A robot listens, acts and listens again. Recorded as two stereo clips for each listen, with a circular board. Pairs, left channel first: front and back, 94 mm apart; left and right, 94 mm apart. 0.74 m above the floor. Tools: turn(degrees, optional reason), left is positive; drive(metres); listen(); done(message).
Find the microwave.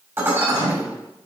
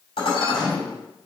turn(degrees=175, reason="The microwave: 175° left.")
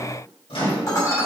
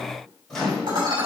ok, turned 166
done("Found it: a microwave, straight ahead, 2 to 4 m away.")